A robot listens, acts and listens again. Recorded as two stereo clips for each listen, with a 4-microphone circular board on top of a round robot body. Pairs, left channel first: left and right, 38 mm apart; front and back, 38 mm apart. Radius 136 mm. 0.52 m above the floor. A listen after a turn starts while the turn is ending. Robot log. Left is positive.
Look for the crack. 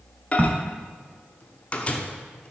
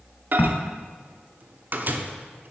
note: The crack: 45° right.
cmd yaw -45
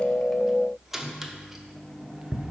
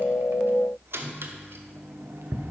end: Facing where the crack came from. I can't hear it now.